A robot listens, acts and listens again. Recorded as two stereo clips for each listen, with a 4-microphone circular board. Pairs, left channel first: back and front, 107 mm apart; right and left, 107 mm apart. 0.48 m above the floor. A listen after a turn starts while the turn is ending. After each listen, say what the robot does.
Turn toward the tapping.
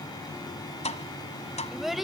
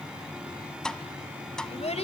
Turn 175° right.
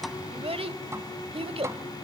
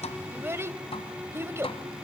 Turn 65° right.
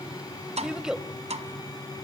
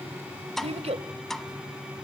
Found it: tapping, straight ahead.